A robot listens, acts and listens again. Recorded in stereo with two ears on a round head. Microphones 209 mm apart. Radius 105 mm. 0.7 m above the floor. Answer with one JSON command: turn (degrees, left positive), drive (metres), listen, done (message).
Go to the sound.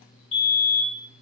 {"turn": 25}
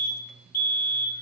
{"turn": 125}
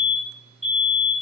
{"drive": 1.0}
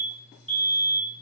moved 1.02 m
{"drive": 1.0}
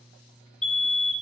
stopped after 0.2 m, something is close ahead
{"done": "Arrived at the fire alarm, straight ahead."}